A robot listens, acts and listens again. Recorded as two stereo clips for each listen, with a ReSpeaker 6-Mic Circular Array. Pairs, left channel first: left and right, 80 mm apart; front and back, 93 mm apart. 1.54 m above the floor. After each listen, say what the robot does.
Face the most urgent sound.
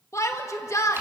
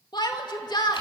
Turn 40° left.
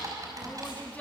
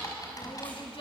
Keep listening.
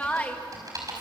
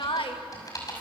Turn 20° left.
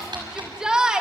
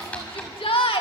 Turn 10° right.
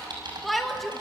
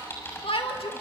Found it: a shout, straight ahead.